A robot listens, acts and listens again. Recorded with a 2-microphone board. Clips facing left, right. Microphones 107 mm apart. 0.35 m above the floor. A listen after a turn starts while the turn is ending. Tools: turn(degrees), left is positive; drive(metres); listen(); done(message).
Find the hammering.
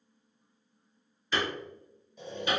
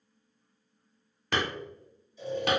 turn(degrees=-65)
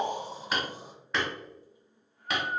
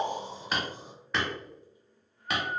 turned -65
done("Found it: hammering, straight ahead, under 1 m away.")